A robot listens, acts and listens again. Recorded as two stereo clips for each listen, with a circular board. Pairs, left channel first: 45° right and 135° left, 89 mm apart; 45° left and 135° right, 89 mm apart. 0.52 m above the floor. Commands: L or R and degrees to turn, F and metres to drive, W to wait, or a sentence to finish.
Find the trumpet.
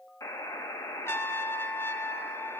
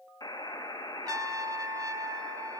R100
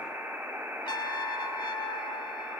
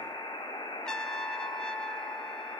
R35
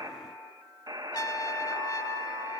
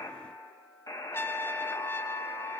R10
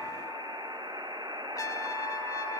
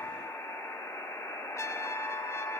W
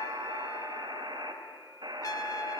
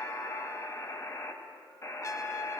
Found it: a trumpet, straight ahead.